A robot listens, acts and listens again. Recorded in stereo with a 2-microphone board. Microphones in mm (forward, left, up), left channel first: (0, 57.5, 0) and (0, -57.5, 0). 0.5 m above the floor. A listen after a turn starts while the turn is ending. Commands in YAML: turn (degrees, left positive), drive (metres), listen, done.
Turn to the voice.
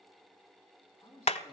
turn: 25
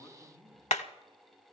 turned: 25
turn: 130
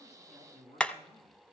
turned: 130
turn: 60
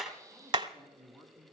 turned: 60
turn: 10
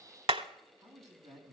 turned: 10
done: "Found it: a man speaking, straight ahead, 2 to 4 m away."